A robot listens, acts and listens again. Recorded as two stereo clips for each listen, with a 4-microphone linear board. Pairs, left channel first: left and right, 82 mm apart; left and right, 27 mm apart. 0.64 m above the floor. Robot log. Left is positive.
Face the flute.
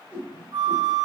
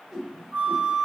note: The flute: about 55° right or 125° right.
cmd yaw -55
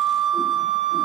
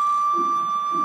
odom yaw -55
note: So it is at 65° right.
cmd yaw -65
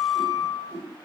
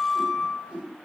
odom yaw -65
end: Found it: a flute, straight ahead, 1 to 2 m away.